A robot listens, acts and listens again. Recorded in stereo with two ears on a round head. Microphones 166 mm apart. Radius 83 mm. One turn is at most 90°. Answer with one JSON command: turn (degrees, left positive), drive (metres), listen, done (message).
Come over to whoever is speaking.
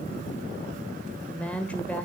{"turn": 30}
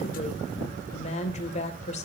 {"turn": 90}
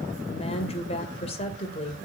{"turn": 35}
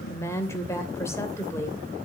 {"turn": 15}
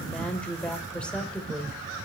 {"drive": 1.0}
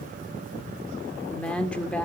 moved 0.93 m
{"drive": 1.0}
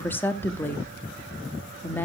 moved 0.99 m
{"turn": 20}
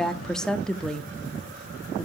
{"drive": 1.0}
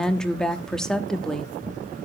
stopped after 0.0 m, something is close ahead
{"done": "I am next to the woman speaking."}